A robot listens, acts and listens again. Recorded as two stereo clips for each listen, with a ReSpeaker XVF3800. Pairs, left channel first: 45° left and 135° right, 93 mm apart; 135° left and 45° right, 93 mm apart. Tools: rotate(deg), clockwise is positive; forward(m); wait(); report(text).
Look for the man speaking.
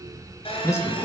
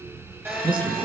rotate(15)
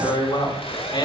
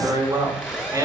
rotate(-10)
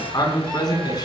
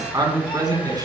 report("Found it: a man speaking, straight ahead, over 4 m away.")